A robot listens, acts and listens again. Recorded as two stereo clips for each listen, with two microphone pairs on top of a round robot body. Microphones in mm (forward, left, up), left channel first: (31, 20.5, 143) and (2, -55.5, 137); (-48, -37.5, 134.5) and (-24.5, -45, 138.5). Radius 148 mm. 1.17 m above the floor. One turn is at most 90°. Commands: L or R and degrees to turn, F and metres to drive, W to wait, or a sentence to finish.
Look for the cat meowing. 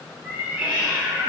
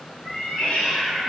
L90
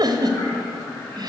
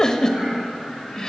L90
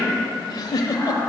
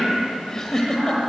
W
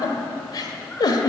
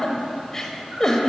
Facing where the cat meowing came from. I can't hear it now.